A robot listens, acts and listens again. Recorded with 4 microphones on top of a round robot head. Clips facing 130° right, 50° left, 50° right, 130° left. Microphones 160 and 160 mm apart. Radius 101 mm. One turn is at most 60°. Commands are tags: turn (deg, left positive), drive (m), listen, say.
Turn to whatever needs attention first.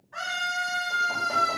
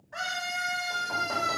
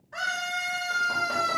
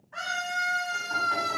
<say>Facing the scream, over 4 m away.</say>